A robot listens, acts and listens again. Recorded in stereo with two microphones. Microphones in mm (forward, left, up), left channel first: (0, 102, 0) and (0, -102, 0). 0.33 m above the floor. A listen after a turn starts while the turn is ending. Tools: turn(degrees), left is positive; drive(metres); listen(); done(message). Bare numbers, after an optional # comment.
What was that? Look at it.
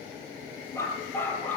turn(30)
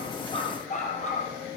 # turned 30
# So it is at 145° left.
turn(145)
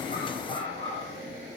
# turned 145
# The dog barking is now 25° left.
turn(25)
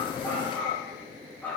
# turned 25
done("Facing the dog barking, over 4 m away.")